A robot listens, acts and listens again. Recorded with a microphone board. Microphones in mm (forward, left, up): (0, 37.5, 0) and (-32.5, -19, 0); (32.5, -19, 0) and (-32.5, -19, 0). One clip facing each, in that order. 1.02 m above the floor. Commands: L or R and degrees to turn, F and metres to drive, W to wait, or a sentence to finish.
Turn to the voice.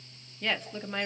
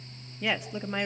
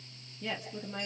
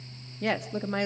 L160
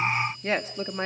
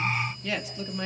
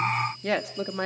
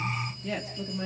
L10
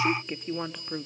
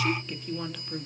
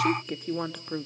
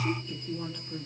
Found it: a woman speaking, straight ahead, 1 to 2 m away.